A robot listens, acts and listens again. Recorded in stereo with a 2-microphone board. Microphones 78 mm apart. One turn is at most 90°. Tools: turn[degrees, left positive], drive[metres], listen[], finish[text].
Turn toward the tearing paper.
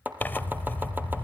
Thought: The tearing paper: about 25° left or 155° left.
Action: turn[25]
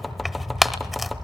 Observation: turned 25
Action: finish[Found it: tearing paper, straight ahead.]